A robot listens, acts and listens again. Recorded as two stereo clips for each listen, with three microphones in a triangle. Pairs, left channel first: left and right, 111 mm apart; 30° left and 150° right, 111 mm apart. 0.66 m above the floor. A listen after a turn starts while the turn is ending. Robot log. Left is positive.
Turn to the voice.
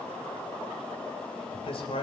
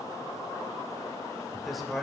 note: The man speaking: 120° left.
cmd yaw +120
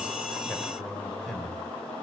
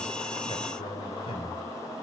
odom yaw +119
cmd idle
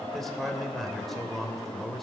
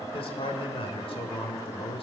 end: Found it: a man speaking, straight ahead.